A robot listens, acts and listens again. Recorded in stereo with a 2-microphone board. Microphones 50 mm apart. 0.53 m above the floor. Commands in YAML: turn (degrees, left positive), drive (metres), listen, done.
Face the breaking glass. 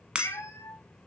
turn: -20
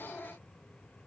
listen: true
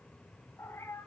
done: "I heard breaking glass, but can't make it out now. It was about straight ahead or 140° right."